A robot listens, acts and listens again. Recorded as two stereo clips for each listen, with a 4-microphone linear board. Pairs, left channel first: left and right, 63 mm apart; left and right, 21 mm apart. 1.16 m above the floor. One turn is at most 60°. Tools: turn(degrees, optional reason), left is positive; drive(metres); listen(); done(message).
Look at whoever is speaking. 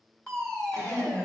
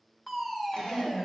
turn(degrees=60)
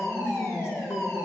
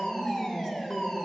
turn(degrees=45, reason="So it is at 45° left.")
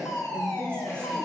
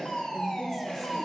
turn(degrees=20, reason="The woman speaking is now 20° left.")
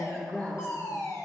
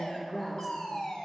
turn(degrees=10, reason="The woman speaking is now 10° left.")
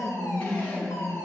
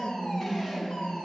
done("Facing the woman speaking, over 4 m away.")